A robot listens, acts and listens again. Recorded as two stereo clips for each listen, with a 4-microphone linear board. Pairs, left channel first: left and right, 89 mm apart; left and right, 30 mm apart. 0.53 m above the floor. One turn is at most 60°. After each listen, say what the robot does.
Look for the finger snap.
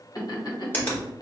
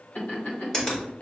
Turn 20° left.
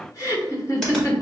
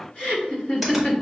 Keep listening.
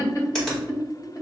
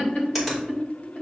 Facing the finger snap, 2 to 4 m away.